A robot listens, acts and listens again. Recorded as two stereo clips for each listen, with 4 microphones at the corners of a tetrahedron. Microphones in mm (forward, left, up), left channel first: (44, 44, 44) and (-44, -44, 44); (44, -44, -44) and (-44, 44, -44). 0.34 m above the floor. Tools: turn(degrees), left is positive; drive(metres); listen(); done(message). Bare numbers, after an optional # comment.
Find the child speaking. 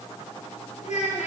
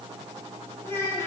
# The child speaking: 25° left.
turn(25)
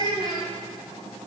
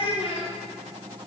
done("Facing the child speaking.")